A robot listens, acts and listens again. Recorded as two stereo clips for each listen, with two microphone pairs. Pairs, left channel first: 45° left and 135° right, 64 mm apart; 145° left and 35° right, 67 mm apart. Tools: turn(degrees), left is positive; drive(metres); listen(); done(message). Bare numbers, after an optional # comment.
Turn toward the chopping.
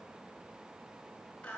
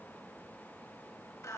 listen()
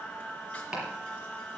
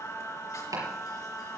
# The chopping: 60° right.
turn(-60)
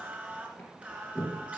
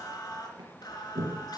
# The chopping is now 15° right.
turn(-15)
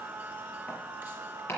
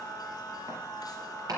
done("Facing the chopping, over 4 m away.")